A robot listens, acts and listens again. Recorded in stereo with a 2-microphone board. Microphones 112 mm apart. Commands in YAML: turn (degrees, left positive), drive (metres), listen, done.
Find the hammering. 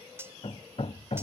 turn: 65
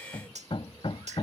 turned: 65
turn: 50
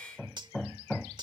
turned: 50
done: "Facing the hammering."